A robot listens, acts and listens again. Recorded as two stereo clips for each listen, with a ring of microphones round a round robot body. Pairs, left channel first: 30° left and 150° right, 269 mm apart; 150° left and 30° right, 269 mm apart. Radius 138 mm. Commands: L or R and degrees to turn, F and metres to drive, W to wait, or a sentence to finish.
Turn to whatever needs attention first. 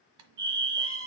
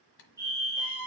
R110
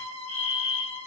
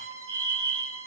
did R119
L10
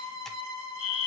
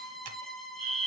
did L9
Found it: a fire alarm, straight ahead, 2 to 4 m away.